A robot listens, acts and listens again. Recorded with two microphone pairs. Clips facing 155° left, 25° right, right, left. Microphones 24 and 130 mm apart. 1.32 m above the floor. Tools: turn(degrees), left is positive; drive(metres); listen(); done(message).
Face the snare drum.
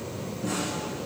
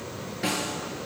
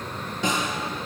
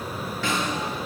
turn(degrees=-15)
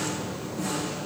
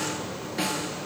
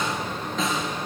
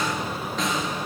done("Facing the snare drum, over 4 m away.")